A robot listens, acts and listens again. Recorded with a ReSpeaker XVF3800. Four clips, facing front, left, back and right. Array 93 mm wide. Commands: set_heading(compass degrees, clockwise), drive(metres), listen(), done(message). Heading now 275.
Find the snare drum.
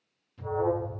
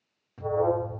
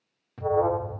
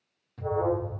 listen()
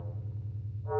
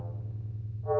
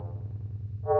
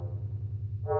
listen()
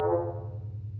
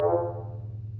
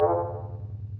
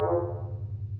done("I can't make out a snare drum, only an alarm.")